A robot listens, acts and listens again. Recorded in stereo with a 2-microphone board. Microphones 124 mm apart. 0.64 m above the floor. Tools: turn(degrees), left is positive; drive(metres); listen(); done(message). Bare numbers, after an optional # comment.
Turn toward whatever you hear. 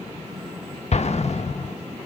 # The explosion: about 60° left or 120° left.
turn(60)
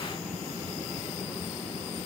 listen()
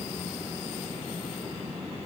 done("I heard an explosion, but can't make it out now. It was about straight ahead or 60° left.")